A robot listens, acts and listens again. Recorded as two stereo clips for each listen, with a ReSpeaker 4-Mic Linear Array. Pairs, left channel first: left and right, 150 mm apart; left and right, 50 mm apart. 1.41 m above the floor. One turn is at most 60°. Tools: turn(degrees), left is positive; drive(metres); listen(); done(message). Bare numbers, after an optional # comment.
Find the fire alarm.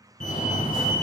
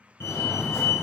# The fire alarm: about 60° left or 120° left.
turn(60)
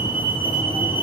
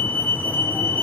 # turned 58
# So it is at 40° left.
turn(40)
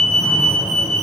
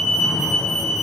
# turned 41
done("Found it: a fire alarm, straight ahead.")